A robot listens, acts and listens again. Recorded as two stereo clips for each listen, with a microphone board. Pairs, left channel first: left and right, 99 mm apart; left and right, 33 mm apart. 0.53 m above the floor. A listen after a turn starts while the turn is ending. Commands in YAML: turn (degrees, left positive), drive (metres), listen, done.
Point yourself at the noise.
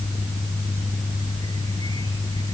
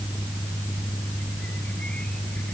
listen: true
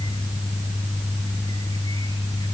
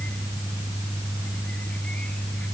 listen: true
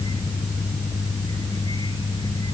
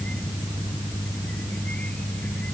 done: "I can't make out anything to turn to."